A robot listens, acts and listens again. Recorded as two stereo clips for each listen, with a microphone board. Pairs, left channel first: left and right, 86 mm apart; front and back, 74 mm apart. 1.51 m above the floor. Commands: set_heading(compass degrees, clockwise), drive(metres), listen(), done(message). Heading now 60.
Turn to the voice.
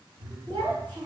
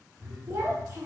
set_heading(180)
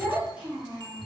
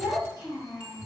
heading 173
set_heading(183)
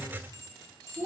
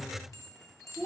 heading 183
done("Facing the child speaking.")